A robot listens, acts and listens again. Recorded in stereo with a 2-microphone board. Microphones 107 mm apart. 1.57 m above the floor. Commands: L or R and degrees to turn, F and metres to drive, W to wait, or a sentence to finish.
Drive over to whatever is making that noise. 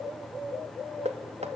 R75
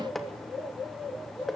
F1.0
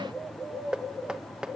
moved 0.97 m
R10
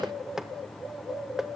F1.0
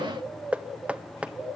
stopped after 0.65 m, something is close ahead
R10
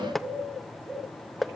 Arrived at the knocking, straight ahead.